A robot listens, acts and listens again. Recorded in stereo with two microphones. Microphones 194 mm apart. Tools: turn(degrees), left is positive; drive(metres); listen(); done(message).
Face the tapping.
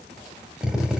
listen()
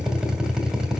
listen()
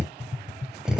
turn(degrees=45)
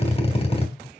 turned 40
turn(degrees=100)
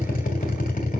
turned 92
listen()
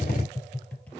turn(degrees=10)
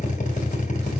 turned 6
listen()
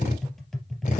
done("Found it: tapping, straight ahead, 2 to 4 m away.")